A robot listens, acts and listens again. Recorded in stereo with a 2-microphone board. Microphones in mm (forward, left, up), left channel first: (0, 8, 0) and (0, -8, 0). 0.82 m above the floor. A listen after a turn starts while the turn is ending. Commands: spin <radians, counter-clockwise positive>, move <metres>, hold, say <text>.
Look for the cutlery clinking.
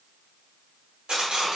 spin -1.57
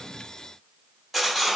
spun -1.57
say Found it: cutlery clinking, straight ahead.